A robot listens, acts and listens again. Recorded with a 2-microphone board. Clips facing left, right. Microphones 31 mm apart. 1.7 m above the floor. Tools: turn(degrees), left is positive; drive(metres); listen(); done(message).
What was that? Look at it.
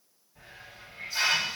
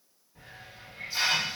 turn(degrees=-30)
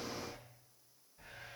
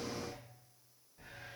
done("Found it: a hiss, straight ahead.")